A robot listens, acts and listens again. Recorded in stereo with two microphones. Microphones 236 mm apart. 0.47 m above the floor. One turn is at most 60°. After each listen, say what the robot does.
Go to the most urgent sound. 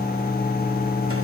Keep listening.
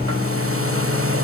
Keep listening.
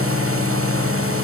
I can't make out anything urgent to turn to.